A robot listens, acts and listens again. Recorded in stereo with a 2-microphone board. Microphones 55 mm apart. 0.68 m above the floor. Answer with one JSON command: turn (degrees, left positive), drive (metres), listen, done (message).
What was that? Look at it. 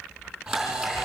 {"turn": -30}
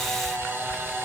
{"turn": -140}
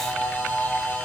{"turn": 25}
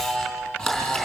{"done": "Facing the camera shutter, over 4 m away."}